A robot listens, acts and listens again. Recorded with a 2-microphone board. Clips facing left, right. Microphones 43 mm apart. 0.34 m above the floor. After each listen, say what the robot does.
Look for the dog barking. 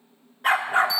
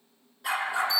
Turn 45° left.
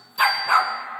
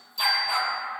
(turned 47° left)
Turn 115° left.
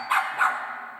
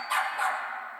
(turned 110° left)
Turn 50° left.
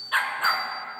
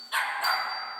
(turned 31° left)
Turn 40° left.
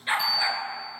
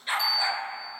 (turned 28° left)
Turn 20° left.
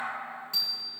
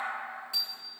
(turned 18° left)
Keep listening.
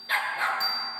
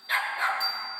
Facing the dog barking, 1 to 2 m away.